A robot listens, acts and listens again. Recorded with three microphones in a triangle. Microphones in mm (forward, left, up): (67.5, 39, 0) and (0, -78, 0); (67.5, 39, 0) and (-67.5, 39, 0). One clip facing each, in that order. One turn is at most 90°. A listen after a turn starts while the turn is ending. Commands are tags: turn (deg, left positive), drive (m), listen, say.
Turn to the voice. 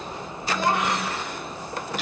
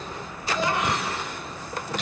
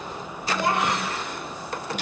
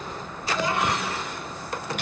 <turn deg="30"/>
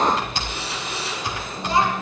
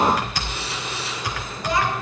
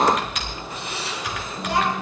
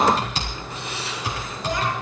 <listen/>
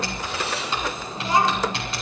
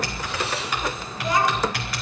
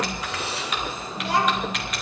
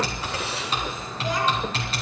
<say>Facing the child speaking, over 4 m away.</say>